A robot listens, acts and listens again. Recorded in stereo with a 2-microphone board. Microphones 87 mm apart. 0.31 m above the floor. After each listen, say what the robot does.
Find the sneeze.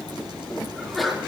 Turn 30° left.
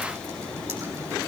Keep listening.
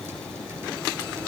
I heard a sneeze, but can't make it out now. It was about 30° right or 150° left.